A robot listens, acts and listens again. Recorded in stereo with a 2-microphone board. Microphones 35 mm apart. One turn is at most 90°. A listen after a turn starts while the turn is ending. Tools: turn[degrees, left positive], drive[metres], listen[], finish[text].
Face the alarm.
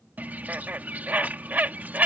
Action: listen[]
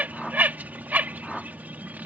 Action: listen[]
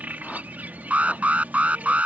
Thought: The alarm: about 40° right or 140° right.
Action: turn[-40]
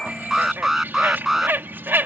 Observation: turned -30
Thought: So it is at 10° right.
Action: turn[-10]
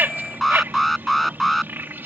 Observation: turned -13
Action: finish[Found it: an alarm, straight ahead.]